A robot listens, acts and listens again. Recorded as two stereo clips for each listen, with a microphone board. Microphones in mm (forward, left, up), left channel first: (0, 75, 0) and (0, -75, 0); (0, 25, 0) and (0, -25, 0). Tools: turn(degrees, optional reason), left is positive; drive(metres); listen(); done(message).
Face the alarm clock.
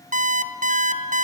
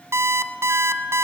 turn(degrees=-65, reason="The alarm clock: about 65° right or 115° right.")
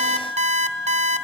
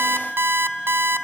turn(degrees=-50, reason="So it is at 50° right.")
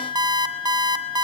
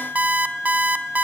turn(degrees=-30, reason="The alarm clock is now 30° right.")
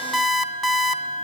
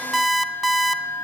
done("Found it: an alarm clock, straight ahead, 2 to 4 m away.")